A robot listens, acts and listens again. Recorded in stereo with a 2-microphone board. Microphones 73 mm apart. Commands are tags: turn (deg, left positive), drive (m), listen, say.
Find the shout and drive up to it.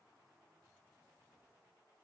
<listen/>
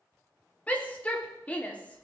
<turn deg="20"/>
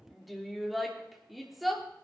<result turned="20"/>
<drive m="1.0"/>
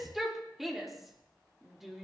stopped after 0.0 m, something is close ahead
<say>Blocked. The shout is further on, straight ahead.</say>